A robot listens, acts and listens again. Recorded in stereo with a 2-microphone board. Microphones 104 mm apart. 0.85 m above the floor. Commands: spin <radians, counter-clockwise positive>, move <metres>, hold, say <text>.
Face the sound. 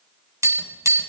spin -0.52
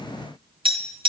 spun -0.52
spin -2.09
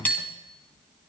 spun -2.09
spin 0.26
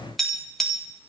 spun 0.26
say Found it: tapping, straight ahead.